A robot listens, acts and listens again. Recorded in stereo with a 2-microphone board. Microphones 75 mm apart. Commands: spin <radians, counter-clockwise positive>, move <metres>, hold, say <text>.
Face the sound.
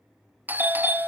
spin -0.44
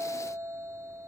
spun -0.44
spin -2.27
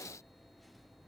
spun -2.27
hold
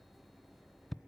say Found it: a doorbell, straight ahead.